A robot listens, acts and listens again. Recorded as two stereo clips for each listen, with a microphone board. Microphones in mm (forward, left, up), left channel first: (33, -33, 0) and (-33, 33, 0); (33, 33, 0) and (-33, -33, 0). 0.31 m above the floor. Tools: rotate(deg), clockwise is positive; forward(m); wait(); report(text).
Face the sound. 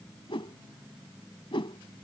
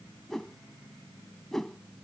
rotate(40)
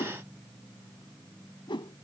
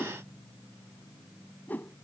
rotate(25)
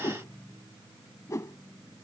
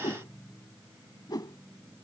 report("Found it: a whoosh, straight ahead.")